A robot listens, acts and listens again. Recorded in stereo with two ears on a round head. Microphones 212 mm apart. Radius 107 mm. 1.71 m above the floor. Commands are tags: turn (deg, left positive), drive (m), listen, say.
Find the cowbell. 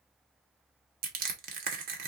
<listen/>
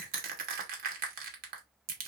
<listen/>
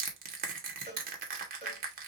<turn deg="25"/>
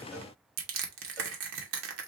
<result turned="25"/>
<listen/>
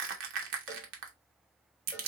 <listen/>
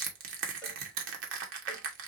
<say>I heard a cowbell, but can't make it out now. It was about straight ahead or 130° left.</say>